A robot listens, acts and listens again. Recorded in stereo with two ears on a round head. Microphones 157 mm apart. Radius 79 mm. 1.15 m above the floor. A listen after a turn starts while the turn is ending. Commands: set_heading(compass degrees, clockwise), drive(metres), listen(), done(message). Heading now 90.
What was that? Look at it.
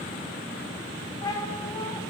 set_heading(70)
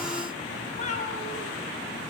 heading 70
set_heading(290)
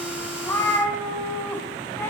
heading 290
set_heading(280)
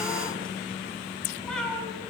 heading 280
done("Facing the cat meowing, over 4 m away.")